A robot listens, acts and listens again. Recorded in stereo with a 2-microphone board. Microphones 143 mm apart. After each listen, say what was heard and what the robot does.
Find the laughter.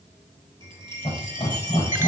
The laughter: about 40° left or 140° left. Turn 40° left.
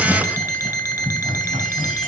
Found it: laughter, straight ahead.